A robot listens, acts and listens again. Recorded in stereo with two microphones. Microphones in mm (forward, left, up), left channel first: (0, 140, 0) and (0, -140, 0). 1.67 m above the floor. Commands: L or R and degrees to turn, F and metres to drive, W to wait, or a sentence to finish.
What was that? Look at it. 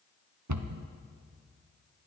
R90
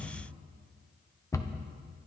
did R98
L10
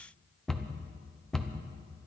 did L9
Facing the cupboard door, under 1 m away.